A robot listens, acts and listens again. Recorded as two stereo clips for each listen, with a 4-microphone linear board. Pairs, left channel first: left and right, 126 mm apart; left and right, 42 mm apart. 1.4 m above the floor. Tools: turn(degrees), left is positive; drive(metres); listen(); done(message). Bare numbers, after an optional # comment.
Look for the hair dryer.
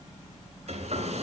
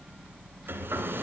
# The hair dryer: about 60° right or 120° right.
turn(-60)
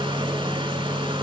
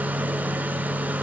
# So it is at 45° right.
turn(-45)
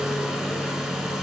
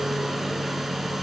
done("Facing the hair dryer.")